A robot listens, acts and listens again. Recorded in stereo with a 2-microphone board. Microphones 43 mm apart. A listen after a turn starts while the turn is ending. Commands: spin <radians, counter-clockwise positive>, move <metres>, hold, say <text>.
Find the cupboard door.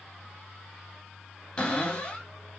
spin 0.52
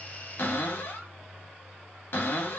spin 2.18
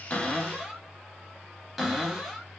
spin -0.17
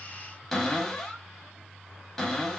say Found it: a cupboard door, straight ahead.